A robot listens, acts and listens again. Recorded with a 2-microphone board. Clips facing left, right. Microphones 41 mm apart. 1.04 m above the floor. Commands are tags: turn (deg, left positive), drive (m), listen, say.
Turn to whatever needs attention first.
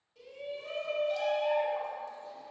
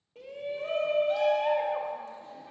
<turn deg="-50"/>
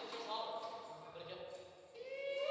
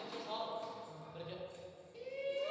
<say>Found it: a shout, straight ahead, under 1 m away.</say>